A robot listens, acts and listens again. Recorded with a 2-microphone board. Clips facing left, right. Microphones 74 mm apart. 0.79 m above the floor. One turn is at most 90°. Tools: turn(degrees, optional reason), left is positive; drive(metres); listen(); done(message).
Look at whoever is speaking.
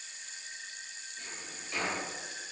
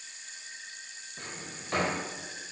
listen()
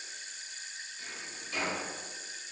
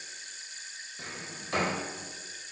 listen()
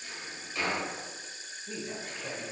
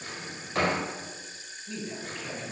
turn(degrees=30, reason="The man speaking: about 30° left or 150° left.")
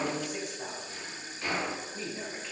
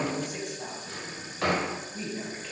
done("Found it: a man speaking, straight ahead.")